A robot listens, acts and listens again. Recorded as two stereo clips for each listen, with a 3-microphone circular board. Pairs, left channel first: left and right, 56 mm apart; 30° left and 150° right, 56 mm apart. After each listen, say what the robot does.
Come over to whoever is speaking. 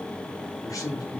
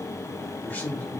Turn 90° left.
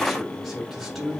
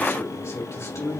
Drive 1.0 m forward.
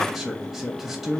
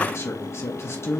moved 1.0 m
Drive 1.0 m forward.
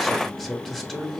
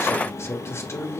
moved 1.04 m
Drive 1.0 m forward.
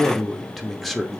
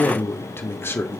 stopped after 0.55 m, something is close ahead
I am next to the man speaking.